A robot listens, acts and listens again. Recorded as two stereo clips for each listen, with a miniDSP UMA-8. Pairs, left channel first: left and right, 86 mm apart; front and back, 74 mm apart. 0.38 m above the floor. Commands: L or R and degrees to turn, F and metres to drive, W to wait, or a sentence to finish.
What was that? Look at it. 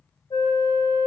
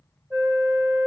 L110
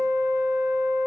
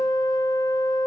R25
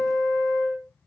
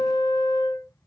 Facing the flute, 2 to 4 m away.